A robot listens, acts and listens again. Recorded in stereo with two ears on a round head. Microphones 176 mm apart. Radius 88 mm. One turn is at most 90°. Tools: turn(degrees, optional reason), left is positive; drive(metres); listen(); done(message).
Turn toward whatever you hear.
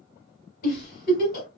turn(degrees=50, reason="The giggle: about 50° left or 130° left.")
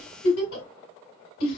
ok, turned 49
turn(degrees=80, reason="So it is at 80° left.")
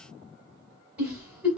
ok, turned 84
turn(degrees=-10, reason="The giggle is now 10° right.")
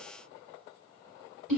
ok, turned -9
done("Found it: a giggle, straight ahead, 2 to 4 m away.")